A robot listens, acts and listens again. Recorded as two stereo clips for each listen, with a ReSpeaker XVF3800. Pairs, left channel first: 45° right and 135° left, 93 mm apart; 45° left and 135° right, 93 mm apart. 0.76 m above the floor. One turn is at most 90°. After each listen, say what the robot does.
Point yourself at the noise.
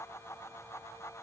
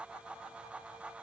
Keep listening.
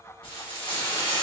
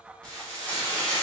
Turn 35° right.
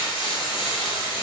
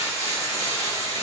Turn 10° right.
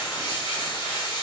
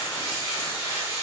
Found it: frying, straight ahead, 1 to 2 m away.